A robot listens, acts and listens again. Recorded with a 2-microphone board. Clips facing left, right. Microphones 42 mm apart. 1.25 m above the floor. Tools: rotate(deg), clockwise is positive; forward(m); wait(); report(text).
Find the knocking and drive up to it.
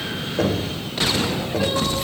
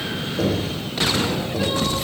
rotate(-45)
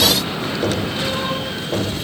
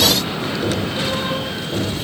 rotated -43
rotate(-90)
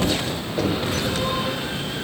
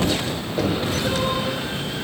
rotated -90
forward(1.0)
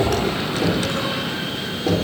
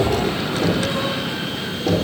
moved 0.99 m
rotate(-10)
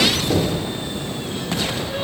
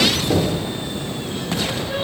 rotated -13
forward(1.0)
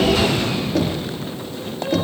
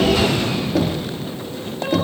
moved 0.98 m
forward(1.0)
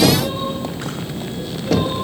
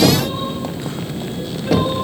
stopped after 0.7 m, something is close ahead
report("Arrived at the knocking, straight ahead.")